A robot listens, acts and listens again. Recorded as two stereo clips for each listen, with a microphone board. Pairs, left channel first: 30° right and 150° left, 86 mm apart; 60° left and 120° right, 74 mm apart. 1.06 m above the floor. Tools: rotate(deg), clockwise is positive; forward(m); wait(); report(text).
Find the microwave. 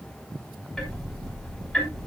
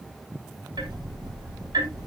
wait()
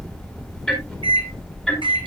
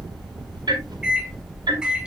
rotate(-160)
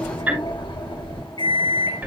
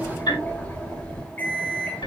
report("Facing the microwave, 2 to 4 m away.")